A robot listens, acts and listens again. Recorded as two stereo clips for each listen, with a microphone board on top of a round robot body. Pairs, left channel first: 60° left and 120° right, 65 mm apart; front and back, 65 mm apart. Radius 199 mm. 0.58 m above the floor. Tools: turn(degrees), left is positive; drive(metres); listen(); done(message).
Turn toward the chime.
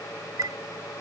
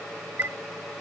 turn(degrees=-125)
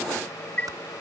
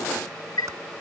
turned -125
turn(degrees=-10)
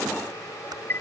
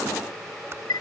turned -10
done("Found it: a chime, straight ahead.")